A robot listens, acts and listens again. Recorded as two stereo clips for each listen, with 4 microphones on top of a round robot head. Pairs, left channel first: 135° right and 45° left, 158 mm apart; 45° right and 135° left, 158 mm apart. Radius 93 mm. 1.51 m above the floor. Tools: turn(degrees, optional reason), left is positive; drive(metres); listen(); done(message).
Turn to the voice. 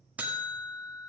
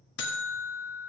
listen()
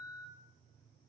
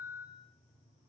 listen()
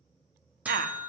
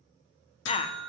turn(degrees=10, reason="The woman speaking: 10° left.")
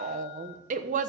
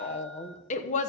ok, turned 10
done("Facing the woman speaking.")